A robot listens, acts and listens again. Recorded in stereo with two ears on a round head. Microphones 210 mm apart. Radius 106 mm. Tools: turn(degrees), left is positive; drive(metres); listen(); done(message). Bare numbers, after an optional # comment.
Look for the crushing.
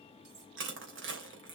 # The crushing: about 55° right or 125° right.
turn(-55)
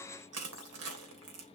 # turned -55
# So it is at 70° right.
turn(-70)
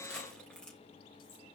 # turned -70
done("Facing the crushing, 2 to 4 m away.")